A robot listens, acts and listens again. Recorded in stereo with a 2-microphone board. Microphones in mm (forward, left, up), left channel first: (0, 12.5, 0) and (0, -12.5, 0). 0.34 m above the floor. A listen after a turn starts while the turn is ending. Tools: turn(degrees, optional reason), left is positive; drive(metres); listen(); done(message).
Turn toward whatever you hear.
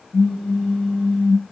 turn(degrees=65, reason="The pop: about 65° left or 115° left.")
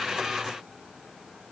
listen()
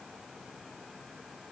done("I heard a pop, but can't make it out now. It was about straight ahead or 50° left.")